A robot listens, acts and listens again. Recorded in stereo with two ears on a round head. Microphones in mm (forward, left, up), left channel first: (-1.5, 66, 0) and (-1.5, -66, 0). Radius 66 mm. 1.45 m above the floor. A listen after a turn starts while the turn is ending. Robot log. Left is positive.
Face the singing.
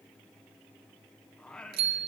cmd yaw +30
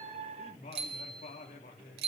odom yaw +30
note: So it is at 125° left.
cmd yaw +125
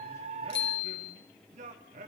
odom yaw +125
note: The singing is now 55° right.
cmd yaw -55
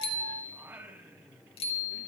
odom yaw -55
note: The singing is now 15° right.
cmd yaw -15
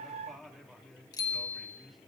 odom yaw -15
end: Found it: singing, straight ahead.